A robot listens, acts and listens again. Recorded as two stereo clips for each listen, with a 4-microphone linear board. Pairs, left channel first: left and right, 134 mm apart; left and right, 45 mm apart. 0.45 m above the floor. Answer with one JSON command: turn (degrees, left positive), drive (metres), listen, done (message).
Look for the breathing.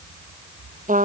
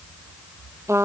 {"listen": true}
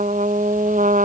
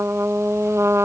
{"listen": true}
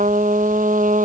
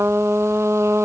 {"done": "I can't make out breathing, only a trumpet."}